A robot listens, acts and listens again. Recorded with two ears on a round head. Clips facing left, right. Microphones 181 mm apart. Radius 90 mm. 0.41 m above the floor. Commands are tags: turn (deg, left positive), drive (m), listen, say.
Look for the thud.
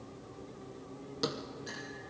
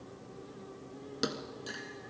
<turn deg="-15"/>
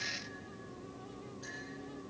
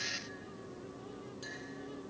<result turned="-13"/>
<listen/>
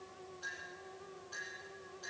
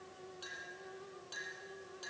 <say>I heard a thud, but can't make it out now. It was about straight ahead or 150° right.</say>